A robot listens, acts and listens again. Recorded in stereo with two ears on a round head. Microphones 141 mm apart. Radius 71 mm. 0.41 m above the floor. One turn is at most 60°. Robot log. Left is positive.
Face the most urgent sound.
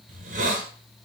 cmd idle
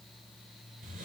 cmd idle
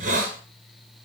end: I can't make out anything urgent, only a hiss.